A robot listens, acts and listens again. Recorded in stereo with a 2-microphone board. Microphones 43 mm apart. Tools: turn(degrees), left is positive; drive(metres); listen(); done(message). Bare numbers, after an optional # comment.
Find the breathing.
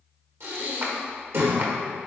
# The breathing: about 65° right or 115° right.
turn(-65)
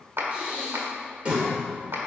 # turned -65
# So it is at 30° right.
turn(-30)
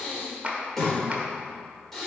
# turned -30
done("Found it: breathing, straight ahead.")